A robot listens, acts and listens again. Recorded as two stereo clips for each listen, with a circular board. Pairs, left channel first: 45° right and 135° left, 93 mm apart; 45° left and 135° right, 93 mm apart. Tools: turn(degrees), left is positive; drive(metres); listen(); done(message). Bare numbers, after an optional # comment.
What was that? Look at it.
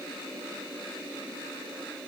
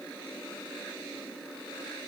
listen()
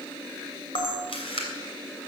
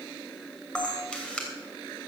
# The camera shutter: 35° right.
turn(-35)
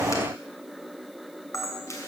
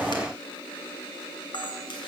# The camera shutter is now 10° left.
turn(10)
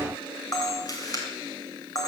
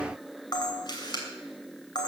done("Facing the camera shutter, 2 to 4 m away.")